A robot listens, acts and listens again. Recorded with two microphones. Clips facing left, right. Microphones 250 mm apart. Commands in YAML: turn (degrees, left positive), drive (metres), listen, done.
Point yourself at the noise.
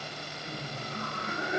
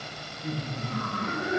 turn: -70
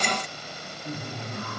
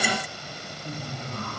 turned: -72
turn: 15
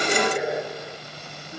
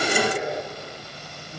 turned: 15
turn: 15
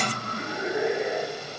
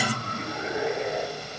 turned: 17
turn: 15
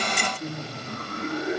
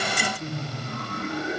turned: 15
done: "Found it: laughter, straight ahead."